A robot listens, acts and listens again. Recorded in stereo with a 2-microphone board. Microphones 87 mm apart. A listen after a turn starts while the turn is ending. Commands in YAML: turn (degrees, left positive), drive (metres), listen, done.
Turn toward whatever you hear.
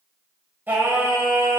turn: -25
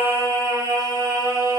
turn: -135
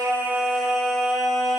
done: "Found it: singing, straight ahead, 1 to 2 m away."